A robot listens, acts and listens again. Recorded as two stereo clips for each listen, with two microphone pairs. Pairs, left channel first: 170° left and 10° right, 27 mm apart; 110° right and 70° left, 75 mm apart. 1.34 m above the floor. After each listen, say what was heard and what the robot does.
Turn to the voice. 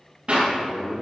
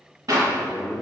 The man speaking: 115° left. Turn 115° left.
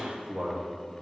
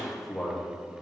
The man speaking is now 30° right. Turn 30° right.
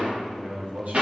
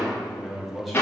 The man speaking is now 20° right. Turn 20° right.
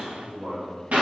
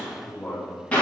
The man speaking is now 20° right. Turn 20° right.
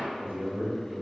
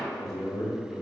The man speaking is now 20° right. Turn 20° right.
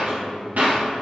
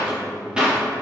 Facing the man speaking, 2 to 4 m away.